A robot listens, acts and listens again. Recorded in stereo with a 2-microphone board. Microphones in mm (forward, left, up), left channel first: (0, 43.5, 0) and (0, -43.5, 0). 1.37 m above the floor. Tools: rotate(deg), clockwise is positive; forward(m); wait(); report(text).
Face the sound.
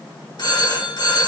rotate(-55)
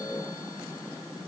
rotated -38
wait()
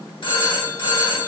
rotate(-85)
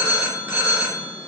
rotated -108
rotate(25)
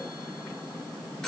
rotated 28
report("Found it: a phone ringing, straight ahead, 2 to 4 m away.")